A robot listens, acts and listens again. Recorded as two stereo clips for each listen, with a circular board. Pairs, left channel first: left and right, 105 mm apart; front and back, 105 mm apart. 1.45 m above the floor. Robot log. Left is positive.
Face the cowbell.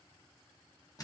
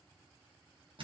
cmd idle
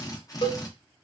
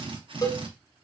note: The cowbell: 55° left.
cmd yaw +55
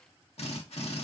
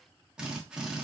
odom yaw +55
cmd idle
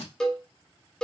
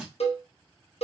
end: Facing the cowbell.